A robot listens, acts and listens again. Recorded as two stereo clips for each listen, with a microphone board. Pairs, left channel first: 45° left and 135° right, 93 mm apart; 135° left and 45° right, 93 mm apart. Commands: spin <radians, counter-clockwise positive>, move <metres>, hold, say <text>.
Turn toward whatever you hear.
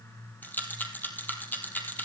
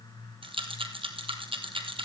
spin -0.44
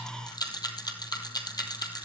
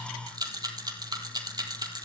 say Facing the rattle, 2 to 4 m away.